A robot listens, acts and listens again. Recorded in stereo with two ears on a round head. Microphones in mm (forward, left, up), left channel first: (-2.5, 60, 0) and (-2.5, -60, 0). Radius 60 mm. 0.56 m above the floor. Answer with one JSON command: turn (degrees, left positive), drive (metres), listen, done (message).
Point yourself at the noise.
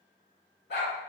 {"turn": 90}
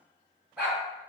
{"turn": -10}
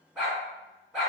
{"done": "Facing the dog barking."}